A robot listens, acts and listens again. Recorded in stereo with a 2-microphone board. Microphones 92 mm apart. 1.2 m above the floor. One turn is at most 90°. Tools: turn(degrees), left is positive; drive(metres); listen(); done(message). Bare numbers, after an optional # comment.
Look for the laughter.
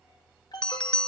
listen()
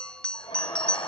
# The laughter: about 55° left or 125° left.
turn(55)
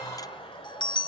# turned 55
# So it is at 75° left.
turn(75)
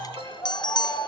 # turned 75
# The laughter is now 25° left.
turn(25)
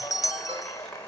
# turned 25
# The laughter is now 10° left.
turn(10)
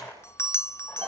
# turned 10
done("Facing the laughter, over 4 m away.")